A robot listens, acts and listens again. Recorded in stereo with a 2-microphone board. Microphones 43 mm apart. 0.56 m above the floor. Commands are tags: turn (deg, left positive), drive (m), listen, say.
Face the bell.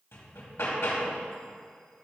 <listen/>
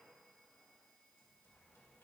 <listen/>
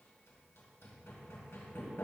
<say>I can't make out a bell to turn to.</say>